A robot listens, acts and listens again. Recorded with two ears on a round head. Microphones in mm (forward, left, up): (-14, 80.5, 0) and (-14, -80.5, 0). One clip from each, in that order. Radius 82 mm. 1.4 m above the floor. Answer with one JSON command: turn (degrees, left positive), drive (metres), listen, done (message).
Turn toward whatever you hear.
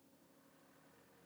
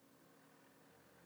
{"listen": true}
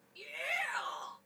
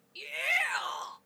{"turn": -75}
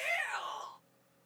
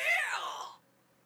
{"turn": -30}
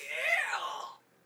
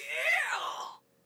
{"turn": -10}
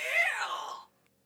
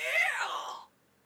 {"done": "Facing the shout."}